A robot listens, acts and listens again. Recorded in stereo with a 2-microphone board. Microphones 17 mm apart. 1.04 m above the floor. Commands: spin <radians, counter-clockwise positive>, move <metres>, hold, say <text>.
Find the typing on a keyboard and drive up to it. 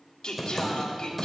spin -0.52
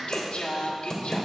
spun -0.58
spin 0.44
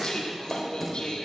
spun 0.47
move 1.0
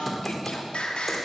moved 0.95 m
move 1.0
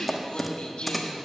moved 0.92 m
move 1.0
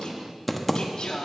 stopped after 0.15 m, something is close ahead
say Arrived at the typing on a keyboard, straight ahead.